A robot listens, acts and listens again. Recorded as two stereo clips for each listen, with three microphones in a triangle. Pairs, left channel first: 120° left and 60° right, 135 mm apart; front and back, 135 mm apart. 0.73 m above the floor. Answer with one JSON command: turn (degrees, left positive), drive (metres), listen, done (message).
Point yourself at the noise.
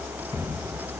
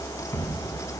{"turn": 65}
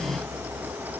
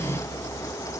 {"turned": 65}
{"done": "I heard a thud from this way, but can't make it out now."}